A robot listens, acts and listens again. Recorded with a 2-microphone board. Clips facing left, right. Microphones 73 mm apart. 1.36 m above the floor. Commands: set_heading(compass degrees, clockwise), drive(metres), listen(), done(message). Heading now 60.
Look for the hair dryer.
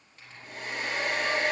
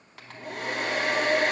set_heading(150)
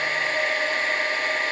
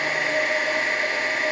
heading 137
set_heading(147)
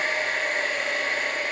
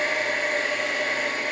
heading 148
done("Found it: a hair dryer, straight ahead.")